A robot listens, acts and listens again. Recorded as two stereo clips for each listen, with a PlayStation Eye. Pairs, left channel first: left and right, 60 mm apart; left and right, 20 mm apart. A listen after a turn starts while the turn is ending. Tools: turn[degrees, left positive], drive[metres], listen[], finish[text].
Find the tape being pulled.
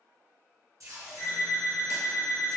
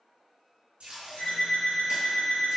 Thought: The tape being pulled: about 75° right or 105° right.
Action: turn[-75]
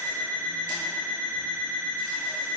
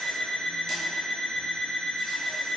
Action: listen[]
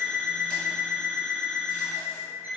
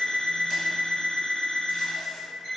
Action: listen[]
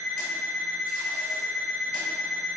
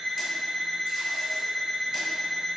Action: finish[I heard tape being pulled, but can't make it out now. It was about straight ahead or 30° right.]